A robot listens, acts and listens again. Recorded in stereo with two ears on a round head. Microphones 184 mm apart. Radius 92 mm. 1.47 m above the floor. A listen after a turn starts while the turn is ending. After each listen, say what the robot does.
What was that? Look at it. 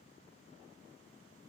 Keep listening.
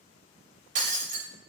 Turn 40° right.
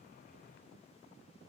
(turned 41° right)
Keep listening.
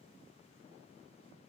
I heard breaking glass, but can't make it out now. It was about straight ahead or 100° right.